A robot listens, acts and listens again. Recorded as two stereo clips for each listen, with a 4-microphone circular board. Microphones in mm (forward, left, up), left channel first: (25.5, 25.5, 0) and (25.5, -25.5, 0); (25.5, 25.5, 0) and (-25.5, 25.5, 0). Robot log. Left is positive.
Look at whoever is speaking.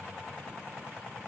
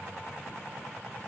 cmd idle
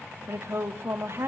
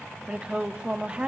note: The woman speaking: 115° right.
cmd yaw -115
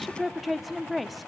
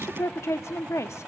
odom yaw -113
end: Facing the woman speaking, 1 to 2 m away.